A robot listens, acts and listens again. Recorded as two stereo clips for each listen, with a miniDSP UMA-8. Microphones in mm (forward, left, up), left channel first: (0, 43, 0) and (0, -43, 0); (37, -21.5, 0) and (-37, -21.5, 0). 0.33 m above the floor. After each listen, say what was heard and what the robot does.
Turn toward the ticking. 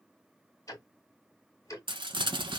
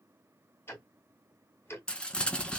The ticking: 50° left. Turn 50° left.
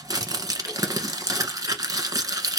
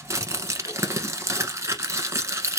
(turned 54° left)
Keep listening.
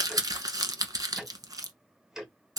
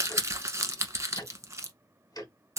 Facing the ticking.